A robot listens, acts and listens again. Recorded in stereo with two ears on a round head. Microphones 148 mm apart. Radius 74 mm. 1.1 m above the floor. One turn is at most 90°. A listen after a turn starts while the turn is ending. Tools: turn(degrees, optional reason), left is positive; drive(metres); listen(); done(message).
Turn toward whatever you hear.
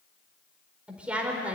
turn(degrees=-30)
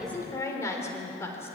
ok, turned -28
turn(degrees=15, reason="So it is at 15° left.")
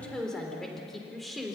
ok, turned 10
done("Facing the woman speaking.")